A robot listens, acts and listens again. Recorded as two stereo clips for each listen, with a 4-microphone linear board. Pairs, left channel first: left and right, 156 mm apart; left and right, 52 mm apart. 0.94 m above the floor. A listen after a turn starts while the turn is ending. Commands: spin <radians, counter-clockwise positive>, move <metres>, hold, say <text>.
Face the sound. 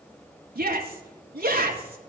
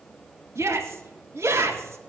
spin -1.22
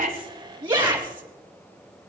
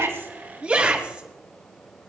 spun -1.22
spin -0.52
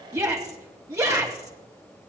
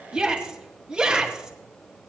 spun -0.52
spin -0.35
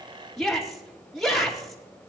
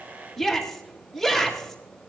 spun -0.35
say Found it: a shout, straight ahead.